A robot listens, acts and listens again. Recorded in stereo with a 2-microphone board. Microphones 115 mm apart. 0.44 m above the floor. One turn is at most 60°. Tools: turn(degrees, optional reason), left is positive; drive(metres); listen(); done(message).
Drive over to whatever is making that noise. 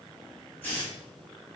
turn(degrees=30)
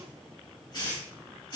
turn(degrees=60, reason="So it is at 140° left.")
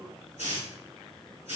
turn(degrees=60, reason="The hiss is now 85° left.")
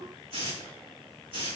turn(degrees=50, reason="The hiss is now 50° left.")
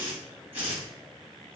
turn(degrees=-10, reason="The hiss is now 10° right.")
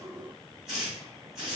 drive(metres=1.0)
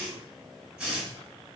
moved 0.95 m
turn(degrees=-10, reason="The hiss is now 10° right.")
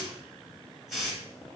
drive(metres=1.0)
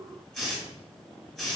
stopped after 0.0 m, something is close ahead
done("I am next to the hiss.")